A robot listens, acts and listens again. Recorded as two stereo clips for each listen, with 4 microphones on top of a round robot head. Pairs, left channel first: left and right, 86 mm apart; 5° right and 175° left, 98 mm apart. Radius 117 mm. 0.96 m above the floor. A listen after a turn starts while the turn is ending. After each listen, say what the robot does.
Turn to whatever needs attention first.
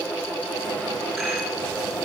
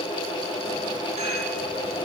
Keep listening.
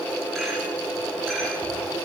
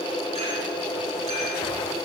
Keep listening.
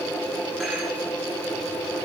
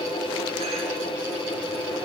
I can't make out anything urgent.